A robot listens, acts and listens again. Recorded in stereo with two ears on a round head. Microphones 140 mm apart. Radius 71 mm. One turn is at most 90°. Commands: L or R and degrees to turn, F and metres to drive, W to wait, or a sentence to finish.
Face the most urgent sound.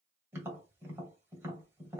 W
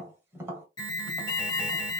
L25
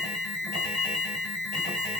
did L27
Found it: an alarm, straight ahead, 1 to 2 m away.